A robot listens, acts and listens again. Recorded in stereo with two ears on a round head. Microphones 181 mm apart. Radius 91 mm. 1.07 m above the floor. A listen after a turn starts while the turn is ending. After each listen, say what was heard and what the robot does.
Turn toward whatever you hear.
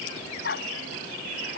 The dog barking: about 50° left or 130° left. Turn 50° left.
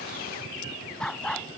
Facing the dog barking.